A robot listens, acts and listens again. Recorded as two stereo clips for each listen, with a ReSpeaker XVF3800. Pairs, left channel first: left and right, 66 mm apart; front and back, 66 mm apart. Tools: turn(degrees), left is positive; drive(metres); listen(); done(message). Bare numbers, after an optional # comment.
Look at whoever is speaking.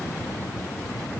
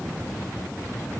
listen()
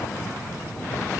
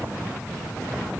listen()
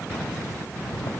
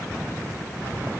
done("I can't make out anyone speaking.")